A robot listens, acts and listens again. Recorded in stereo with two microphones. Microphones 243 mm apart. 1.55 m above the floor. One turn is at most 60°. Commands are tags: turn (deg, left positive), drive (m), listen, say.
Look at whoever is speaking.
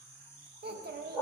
<turn deg="-40"/>
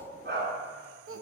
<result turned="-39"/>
<turn deg="-60"/>
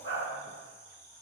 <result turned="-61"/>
<turn deg="-30"/>
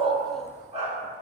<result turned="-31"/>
<listen/>
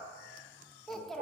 <say>Facing the child speaking.</say>